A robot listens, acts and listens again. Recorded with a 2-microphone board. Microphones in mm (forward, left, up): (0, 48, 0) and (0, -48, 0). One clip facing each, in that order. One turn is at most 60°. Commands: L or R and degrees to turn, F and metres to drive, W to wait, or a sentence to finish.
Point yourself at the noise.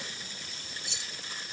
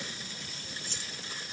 R40
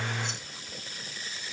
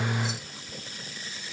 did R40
W
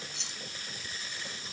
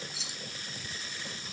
Found it: keys jangling, straight ahead.